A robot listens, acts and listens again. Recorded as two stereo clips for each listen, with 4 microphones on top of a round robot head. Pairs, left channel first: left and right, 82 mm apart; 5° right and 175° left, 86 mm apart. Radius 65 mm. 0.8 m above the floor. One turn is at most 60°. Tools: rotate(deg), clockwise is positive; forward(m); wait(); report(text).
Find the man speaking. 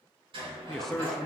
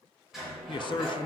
report("Facing the man speaking.")